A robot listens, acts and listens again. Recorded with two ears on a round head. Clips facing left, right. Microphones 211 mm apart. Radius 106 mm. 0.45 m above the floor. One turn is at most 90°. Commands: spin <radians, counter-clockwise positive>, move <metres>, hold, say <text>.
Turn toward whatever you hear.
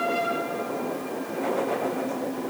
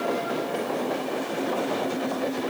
hold
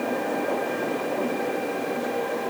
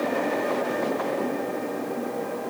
hold
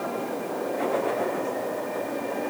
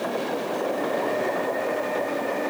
say I can't make out anything to turn to.